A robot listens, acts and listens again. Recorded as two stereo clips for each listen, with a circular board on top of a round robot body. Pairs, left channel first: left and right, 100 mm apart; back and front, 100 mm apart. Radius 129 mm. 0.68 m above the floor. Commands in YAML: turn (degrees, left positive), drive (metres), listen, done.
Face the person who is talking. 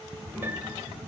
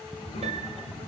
turn: 165
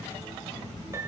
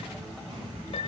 listen: true
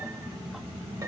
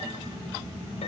turn: 30
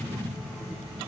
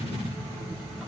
turn: -10
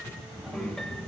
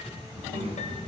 done: "Found it: a child speaking, straight ahead."